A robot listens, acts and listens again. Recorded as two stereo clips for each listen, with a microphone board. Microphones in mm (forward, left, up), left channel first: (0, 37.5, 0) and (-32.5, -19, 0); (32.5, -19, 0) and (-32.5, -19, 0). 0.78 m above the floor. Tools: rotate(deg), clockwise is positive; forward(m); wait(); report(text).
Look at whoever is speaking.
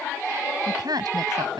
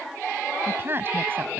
rotate(120)
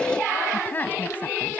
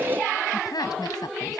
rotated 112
report("Found it: a woman speaking, straight ahead.")